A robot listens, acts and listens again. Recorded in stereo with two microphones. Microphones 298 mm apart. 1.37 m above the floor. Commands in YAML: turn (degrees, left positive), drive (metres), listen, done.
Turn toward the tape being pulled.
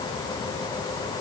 listen: true
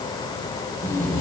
turn: 30
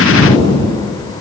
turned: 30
turn: 140
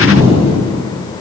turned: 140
turn: -45
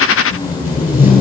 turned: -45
turn: -10
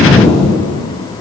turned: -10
done: "Found it: tape being pulled, straight ahead."